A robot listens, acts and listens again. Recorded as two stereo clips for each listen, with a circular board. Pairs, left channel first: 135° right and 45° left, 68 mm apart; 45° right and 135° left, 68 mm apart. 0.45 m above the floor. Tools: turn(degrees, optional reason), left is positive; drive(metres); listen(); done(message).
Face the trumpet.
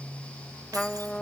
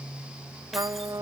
turn(degrees=145, reason="The trumpet: 145° left.")
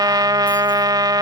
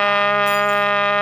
turn(degrees=35, reason="The trumpet is now 35° left.")
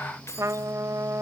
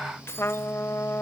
done("Found it: a trumpet, straight ahead.")